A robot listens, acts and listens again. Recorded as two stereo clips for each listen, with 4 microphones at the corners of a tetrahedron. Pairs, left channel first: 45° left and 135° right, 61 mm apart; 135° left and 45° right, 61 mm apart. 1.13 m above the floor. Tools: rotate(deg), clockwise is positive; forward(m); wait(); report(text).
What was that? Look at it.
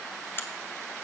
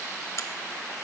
rotate(-95)
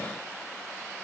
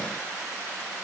report("I heard a crack from this way, but can't make it out now.")